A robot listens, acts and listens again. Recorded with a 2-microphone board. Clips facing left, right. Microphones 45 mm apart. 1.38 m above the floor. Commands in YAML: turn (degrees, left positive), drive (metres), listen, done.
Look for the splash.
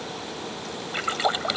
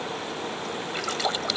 turn: 25
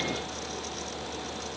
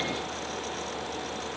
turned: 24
listen: true
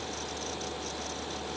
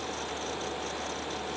done: "I heard a splash, but can't make it out now. It was about straight ahead or 130° left."